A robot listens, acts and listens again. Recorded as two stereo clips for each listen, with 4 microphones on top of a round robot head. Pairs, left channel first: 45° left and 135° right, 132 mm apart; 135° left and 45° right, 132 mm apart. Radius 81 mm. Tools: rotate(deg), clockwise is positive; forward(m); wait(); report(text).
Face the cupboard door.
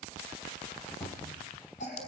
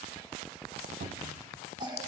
rotate(25)
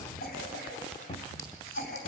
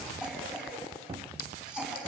report("Facing the cupboard door, 1 to 2 m away.")